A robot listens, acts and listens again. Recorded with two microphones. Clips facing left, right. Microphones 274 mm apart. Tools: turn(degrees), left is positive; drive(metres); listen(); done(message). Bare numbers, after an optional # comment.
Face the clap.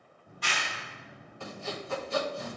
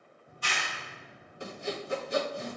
turn(90)
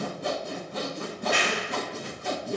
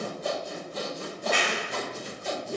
# So it is at 10° left.
turn(10)
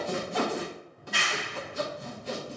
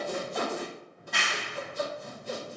done("Facing the clap, 1 to 2 m away.")